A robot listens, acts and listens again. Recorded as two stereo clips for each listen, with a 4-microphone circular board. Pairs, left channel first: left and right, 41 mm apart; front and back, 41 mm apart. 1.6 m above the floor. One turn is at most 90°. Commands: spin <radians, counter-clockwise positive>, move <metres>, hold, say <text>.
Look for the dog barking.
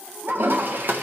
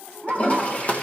spin -1.57
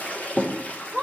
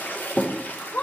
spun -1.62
spin -0.17
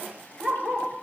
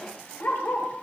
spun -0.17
say Facing the dog barking, 2 to 4 m away.